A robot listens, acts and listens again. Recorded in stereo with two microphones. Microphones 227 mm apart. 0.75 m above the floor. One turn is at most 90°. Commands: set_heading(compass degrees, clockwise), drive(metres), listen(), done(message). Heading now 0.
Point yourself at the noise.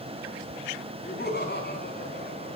set_heading(315)
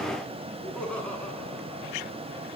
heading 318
done("Facing the laughter, over 4 m away.")